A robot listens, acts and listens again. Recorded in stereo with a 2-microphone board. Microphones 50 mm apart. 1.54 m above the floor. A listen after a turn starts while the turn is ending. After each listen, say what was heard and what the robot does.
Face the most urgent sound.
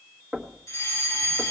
The fire alarm: about 75° left or 105° left. Turn 75° left.
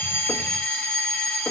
So it is at 25° left. Turn 25° left.
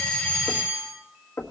Found it: a fire alarm, straight ahead, over 4 m away.